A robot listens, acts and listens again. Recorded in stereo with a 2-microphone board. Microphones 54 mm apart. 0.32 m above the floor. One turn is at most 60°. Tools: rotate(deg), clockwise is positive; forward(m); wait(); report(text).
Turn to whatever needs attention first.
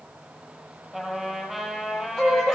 rotate(-30)
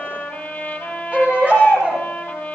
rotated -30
rotate(25)
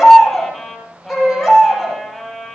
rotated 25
report("Facing the baby crying, over 4 m away.")